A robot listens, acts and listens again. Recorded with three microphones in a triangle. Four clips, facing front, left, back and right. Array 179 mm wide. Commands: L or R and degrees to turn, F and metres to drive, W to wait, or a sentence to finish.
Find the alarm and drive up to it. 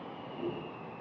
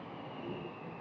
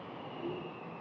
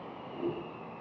W
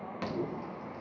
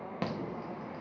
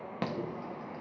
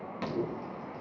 L145
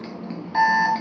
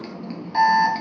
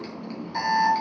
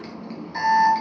L35
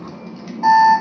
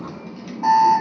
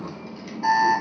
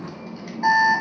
R10
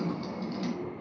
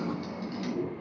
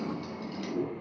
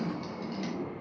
F1.0
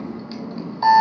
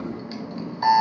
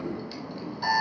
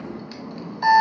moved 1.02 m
F1.0
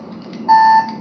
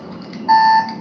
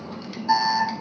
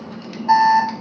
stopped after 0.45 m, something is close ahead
Arrived at the alarm, straight ahead.